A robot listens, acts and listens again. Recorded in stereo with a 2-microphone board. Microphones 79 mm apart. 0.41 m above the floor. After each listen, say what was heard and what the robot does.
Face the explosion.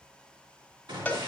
Turn 90° right.
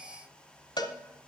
I heard an explosion from this way, but can't make it out now.